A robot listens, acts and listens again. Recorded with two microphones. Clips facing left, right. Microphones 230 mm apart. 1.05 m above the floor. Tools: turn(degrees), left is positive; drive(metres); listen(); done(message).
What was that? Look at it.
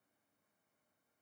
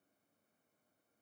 listen()
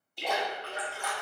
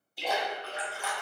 turn(degrees=-30)
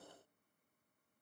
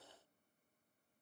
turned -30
listen()
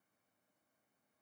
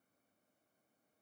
done("I heard a splash, but can't make it out now. It was about 25° left or 145° right.")